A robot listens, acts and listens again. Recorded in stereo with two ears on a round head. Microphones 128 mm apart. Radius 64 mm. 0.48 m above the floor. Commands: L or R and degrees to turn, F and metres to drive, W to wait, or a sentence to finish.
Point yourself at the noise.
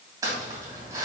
R25
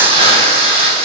R130
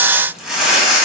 Found it: crumpling, straight ahead.